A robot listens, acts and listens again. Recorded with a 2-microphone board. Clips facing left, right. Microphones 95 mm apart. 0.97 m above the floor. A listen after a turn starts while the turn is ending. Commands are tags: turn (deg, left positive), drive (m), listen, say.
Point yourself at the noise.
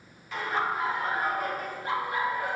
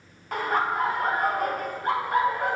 <turn deg="-55"/>
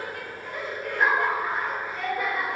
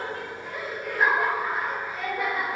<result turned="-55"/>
<say>Found it: laughter, straight ahead.</say>